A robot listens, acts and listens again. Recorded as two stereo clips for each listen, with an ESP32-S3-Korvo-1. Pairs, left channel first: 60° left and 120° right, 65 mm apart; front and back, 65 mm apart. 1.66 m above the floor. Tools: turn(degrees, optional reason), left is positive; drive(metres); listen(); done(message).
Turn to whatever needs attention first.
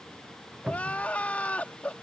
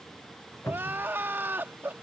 turn(degrees=125, reason="The crying: 125° left.")
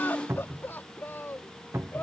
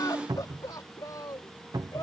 done("Found it: crying, straight ahead.")